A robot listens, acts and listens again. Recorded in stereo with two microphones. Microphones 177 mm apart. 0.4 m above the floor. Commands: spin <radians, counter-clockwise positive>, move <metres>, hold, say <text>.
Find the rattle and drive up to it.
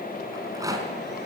spin -0.35
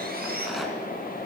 hold
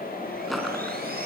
move 1.0
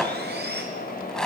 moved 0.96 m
move 1.0
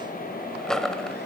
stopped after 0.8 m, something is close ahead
say Arrived at the rattle, straight ahead.